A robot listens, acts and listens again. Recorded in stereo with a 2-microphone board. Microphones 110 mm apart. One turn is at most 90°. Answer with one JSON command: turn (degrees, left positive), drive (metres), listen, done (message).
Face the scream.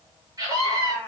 {"turn": -30}
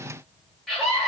{"done": "Facing the scream."}